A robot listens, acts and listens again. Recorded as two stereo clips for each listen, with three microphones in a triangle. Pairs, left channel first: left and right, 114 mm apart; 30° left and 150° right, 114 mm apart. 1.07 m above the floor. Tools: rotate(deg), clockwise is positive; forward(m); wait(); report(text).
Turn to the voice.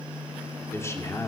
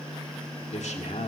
rotate(-25)
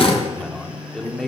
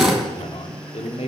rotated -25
report("Found it: a man speaking, straight ahead, 2 to 4 m away.")